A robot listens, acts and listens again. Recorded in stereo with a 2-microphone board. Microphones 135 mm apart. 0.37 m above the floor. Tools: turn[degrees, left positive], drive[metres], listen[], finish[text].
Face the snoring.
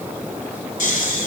Thought: The snoring: about 65° left or 115° left.
Action: turn[65]
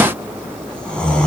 Action: finish[Found it: snoring, straight ahead, 1 to 2 m away.]